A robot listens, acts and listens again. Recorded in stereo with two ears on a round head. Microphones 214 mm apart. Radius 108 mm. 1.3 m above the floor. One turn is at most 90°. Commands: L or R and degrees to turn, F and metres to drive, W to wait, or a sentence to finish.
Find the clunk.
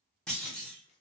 L30
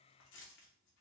W
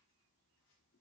I heard a clunk, but can't make it out now. It was about 25° right or 145° left.